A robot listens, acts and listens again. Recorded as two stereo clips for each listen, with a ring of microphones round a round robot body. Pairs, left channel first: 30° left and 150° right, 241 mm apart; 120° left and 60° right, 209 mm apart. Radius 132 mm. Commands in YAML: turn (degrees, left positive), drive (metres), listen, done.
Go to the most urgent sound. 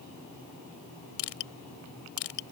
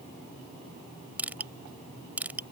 listen: true
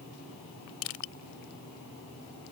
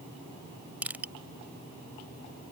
listen: true
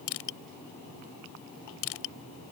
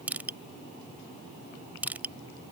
done: "I can't make out anything urgent to turn to."